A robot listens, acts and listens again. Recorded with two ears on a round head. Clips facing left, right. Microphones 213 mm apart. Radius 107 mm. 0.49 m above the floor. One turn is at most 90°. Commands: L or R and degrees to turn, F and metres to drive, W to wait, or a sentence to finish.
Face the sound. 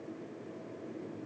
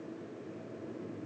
W
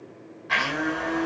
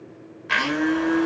R65
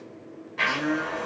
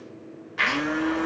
R20
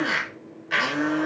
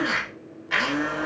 Facing the blender, 1 to 2 m away.